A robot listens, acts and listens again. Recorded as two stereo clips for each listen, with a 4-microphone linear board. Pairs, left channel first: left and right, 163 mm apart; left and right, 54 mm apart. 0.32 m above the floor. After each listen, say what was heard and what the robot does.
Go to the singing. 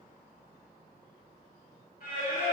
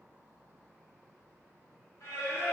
The singing: about 60° left or 120° left. Turn 60° left.
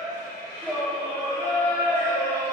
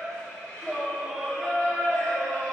So it is at 15° left. Turn 15° left.
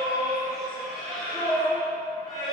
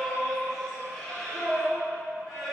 Drive 1.0 m forward.
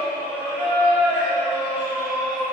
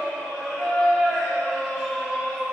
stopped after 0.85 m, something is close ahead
The singing is now 10° right. Turn 10° right.
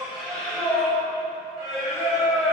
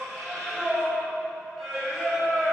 I am next to the singing.